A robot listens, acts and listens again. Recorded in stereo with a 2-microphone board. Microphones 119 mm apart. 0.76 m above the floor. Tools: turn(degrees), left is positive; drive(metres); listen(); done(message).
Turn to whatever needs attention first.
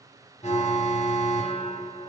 turn(degrees=65)
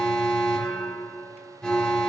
done("Facing the alarm, 1 to 2 m away.")